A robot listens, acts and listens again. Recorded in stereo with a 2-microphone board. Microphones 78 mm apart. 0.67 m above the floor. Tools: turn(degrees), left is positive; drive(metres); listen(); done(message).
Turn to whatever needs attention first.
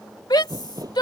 turn(degrees=65)
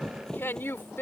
turn(degrees=35)
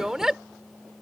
done("Found it: a shout, straight ahead.")